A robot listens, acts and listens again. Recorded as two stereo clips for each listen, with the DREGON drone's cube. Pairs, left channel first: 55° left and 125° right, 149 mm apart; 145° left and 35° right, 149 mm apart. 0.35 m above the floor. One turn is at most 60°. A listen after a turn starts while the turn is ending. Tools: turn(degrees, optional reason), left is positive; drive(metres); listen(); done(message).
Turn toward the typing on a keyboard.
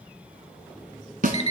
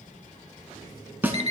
listen()
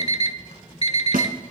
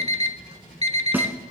listen()
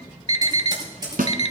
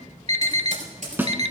turn(degrees=-60, reason="The typing on a keyboard: 65° right.")
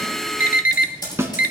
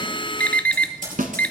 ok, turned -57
done("Found it: typing on a keyboard, straight ahead.")